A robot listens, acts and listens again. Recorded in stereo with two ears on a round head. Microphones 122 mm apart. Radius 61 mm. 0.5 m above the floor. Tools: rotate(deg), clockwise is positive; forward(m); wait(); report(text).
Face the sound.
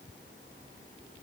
wait()
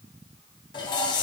rotate(-35)
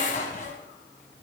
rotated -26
rotate(-120)
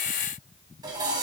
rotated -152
rotate(30)
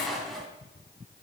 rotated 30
report("Facing the dishes clattering.")